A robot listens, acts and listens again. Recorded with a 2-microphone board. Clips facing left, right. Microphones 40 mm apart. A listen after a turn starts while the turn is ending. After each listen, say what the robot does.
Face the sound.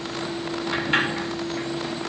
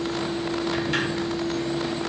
Turn 30° left.
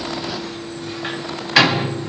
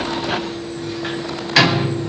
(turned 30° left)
Found it: a sliding door, straight ahead, under 1 m away.